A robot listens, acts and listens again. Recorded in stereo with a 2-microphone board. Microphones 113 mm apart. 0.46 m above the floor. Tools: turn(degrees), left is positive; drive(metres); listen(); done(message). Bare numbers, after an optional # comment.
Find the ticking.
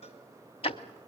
# The ticking: about 60° left or 120° left.
turn(60)
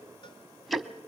done("Found it: ticking, straight ahead.")